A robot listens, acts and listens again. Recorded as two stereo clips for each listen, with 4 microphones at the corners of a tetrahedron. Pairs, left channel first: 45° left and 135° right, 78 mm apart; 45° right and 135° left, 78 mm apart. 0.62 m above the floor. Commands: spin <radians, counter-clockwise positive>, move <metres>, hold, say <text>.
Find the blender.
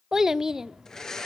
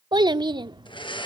spin -0.70
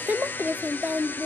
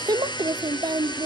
spin -0.35
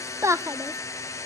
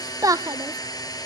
say Facing the blender, 2 to 4 m away.